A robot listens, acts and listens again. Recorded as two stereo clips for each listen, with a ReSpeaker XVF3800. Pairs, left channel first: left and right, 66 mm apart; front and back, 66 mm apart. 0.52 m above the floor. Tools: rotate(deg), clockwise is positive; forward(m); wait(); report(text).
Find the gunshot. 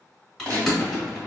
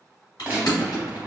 rotate(110)
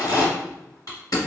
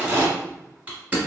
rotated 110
report("Facing where the gunshot came from. I can't hear it now.")